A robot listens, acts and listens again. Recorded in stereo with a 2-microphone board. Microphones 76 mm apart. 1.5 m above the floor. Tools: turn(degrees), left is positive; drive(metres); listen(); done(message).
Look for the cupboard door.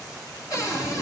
turn(degrees=50)
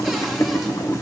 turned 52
listen()
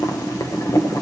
listen()
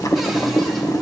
done("I heard a cupboard door, but can't make it out now. It was about straight ahead or 80° left.")